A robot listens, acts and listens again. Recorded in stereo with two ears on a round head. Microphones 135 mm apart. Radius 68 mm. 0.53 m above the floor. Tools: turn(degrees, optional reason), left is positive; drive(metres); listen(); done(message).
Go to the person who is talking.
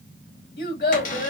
turn(degrees=65, reason="The child speaking: about 65° left or 115° left.")
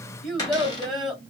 drive(metres=1.0)
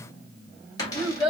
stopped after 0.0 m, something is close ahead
done("Blocked. The child speaking is further on, straight ahead.")